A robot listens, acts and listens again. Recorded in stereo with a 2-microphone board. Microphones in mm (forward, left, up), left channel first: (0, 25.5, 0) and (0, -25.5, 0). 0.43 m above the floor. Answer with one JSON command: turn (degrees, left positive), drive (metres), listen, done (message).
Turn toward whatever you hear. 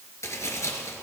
{"turn": 70}
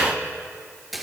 {"listen": true}
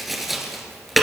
{"done": "Facing the tapping."}